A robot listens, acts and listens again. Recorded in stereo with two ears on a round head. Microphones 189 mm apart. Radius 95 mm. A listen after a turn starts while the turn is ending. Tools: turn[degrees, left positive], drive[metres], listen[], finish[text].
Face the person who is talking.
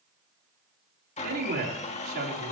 Thought: The man speaking: about 45° right or 135° right.
Action: turn[-45]
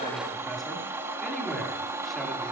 Action: listen[]
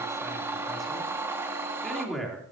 Action: finish[Found it: a man speaking, straight ahead, 2 to 4 m away.]